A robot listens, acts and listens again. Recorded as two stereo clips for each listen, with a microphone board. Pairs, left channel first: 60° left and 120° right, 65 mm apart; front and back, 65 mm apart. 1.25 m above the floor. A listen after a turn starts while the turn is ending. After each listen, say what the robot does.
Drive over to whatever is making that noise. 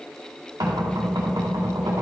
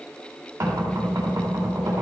Turn 140° right.
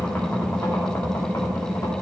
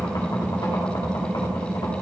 Turn 15° left.
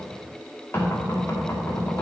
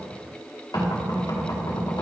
Turn 10° left.
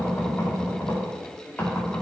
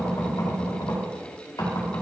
Drive 1.0 m forward.
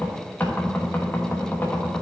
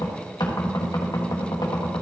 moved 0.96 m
Drive 1.0 m forward.
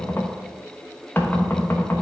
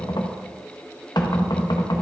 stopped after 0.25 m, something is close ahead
I am next to the knocking.